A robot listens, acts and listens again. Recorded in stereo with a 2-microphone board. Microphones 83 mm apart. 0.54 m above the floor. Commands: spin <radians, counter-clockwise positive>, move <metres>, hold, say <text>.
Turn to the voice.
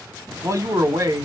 spin -0.70
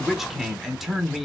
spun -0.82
say Found it: a man speaking, straight ahead, 1 to 2 m away.